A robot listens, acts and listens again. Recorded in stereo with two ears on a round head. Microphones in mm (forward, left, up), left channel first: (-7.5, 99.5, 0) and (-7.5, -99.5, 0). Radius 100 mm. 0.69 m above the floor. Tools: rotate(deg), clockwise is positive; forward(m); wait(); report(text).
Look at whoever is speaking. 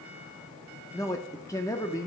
rotate(-30)
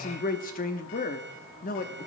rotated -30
rotate(-130)
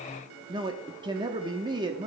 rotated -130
rotate(25)
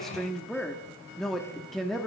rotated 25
report("Found it: a man speaking, straight ahead, under 1 m away.")